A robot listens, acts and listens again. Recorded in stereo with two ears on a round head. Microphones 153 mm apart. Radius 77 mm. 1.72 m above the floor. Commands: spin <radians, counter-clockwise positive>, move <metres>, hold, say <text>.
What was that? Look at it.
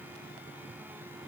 hold
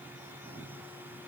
hold
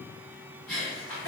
spin 0.52
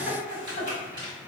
spin -0.52
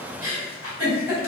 spin -0.26
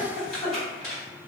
say Facing the giggle.